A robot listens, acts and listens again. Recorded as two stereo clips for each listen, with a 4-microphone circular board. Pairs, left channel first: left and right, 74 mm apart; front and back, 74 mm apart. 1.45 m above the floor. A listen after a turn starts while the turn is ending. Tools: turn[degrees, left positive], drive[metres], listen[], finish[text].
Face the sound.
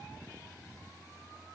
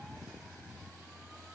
Action: listen[]
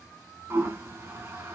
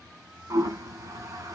Thought: The toilet flushing: 145° right.
Action: turn[-145]
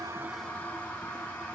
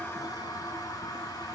Thought: The toilet flushing is now 20° left.
Action: turn[20]
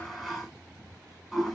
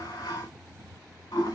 Action: finish[Found it: a toilet flushing, straight ahead.]